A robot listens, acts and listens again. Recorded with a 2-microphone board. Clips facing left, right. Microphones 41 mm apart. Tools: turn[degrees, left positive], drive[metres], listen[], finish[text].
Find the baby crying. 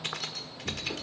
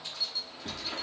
Action: listen[]
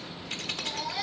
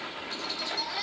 Action: turn[30]
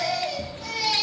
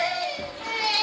Thought: So it is at 30° right.
Action: turn[-30]
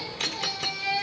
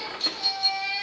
Action: finish[Found it: a baby crying, straight ahead, over 4 m away.]